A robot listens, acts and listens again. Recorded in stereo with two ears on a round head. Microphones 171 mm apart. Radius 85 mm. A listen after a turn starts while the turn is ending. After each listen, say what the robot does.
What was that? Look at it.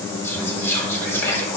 Turn 30° left.
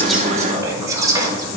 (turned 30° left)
Turn 20° right.
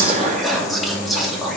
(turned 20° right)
Found it: whispering, straight ahead.